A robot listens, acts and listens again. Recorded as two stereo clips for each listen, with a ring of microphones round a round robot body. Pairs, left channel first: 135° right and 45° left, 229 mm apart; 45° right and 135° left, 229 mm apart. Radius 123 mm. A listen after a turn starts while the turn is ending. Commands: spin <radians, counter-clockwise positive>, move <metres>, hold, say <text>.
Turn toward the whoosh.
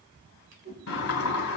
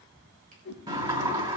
say Found it: a whoosh, straight ahead, 2 to 4 m away.